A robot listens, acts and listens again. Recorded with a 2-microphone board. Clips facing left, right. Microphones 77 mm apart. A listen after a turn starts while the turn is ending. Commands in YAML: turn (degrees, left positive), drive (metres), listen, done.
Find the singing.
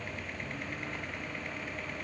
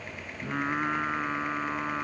turn: -90
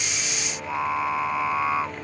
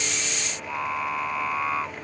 turn: 10
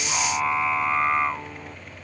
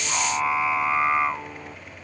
done: "Facing the singing."